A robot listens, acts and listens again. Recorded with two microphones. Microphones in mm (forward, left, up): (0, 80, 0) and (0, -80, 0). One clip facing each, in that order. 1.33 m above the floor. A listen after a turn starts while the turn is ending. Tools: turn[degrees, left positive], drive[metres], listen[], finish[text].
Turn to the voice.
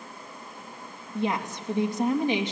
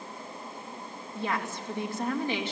Thought: The woman speaking: about 15° left or 165° left.
Action: turn[15]
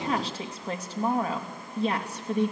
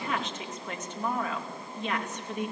Thought: So it is at 145° left.
Action: turn[145]
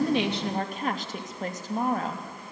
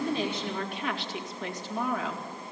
Thought: The woman speaking is now 45° left.
Action: turn[45]
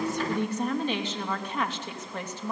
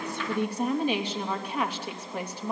Thought: The woman speaking is now 10° right.
Action: turn[-10]
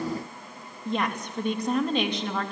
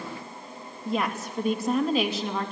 Action: finish[Facing the woman speaking, 2 to 4 m away.]